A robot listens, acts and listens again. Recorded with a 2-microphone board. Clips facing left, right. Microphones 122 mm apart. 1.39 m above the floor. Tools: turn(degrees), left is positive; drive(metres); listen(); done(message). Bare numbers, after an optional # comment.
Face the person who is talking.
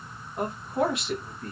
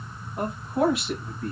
turn(30)
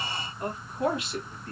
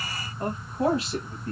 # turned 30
# So it is at 35° right.
turn(-35)
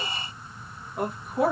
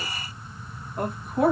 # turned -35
done("Facing the man speaking.")